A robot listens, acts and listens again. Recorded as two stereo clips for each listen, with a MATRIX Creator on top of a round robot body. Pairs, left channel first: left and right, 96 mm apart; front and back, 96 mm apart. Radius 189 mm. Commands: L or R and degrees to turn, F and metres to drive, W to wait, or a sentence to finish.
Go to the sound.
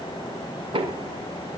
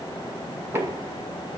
R115
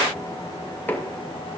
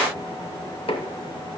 L20
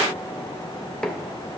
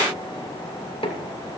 F1.0
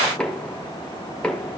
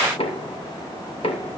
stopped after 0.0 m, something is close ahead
L10
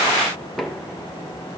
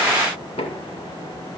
Something is in my way. I am facing the knocking but have not reached it.